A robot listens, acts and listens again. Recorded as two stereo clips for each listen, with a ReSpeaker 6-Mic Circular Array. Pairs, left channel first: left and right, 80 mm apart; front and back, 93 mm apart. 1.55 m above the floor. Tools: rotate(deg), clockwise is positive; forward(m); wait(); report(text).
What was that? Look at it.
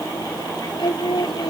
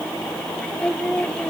rotate(-80)
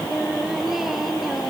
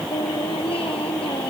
report("Facing the singing.")